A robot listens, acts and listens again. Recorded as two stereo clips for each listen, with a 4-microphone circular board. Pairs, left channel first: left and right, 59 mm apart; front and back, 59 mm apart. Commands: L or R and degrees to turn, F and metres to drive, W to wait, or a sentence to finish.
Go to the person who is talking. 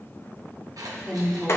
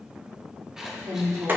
L175
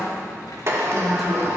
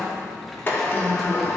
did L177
W
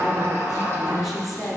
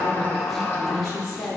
F1.0
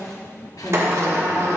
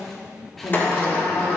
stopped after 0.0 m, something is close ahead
W
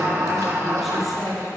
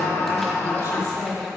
Something is in my way. I am facing the woman speaking but have not reached it.